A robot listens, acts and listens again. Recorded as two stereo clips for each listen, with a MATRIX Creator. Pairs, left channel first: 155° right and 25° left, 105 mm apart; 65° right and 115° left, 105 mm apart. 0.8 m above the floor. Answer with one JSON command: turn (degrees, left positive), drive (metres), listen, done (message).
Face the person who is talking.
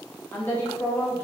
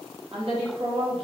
{"turn": 130}
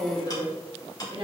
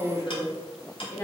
{"turn": -10}
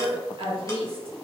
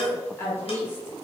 {"done": "Facing the woman speaking."}